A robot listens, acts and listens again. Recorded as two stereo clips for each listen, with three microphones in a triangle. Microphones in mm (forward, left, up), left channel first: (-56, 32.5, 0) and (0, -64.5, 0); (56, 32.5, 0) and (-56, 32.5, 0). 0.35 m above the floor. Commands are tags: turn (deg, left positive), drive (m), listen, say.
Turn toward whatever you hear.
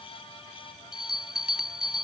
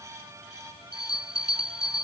<turn deg="-145"/>
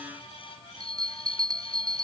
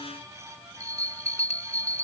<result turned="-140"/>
<turn deg="-10"/>
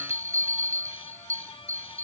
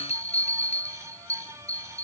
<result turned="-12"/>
<say>Found it: a bell, straight ahead.</say>